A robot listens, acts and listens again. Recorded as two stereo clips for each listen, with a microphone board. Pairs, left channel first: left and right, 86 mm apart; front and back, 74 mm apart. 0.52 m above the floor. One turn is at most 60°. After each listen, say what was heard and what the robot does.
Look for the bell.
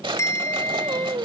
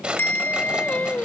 The bell: 50° left. Turn 50° left.
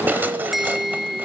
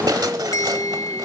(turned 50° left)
Facing the bell.